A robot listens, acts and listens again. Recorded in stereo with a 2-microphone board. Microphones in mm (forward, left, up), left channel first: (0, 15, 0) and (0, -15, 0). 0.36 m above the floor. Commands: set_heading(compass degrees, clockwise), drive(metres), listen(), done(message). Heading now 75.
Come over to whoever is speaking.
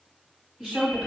set_heading(100)
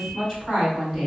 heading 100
drive(1.0)
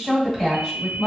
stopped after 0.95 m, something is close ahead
set_heading(110)
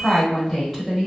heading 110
done("Arrived at the woman speaking, straight ahead.")